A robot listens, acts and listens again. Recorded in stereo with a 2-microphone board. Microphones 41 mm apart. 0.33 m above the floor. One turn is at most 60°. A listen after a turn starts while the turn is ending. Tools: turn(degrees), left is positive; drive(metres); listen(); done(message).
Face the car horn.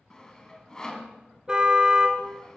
turn(degrees=-20)
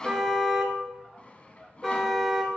done("Facing the car horn, 2 to 4 m away.")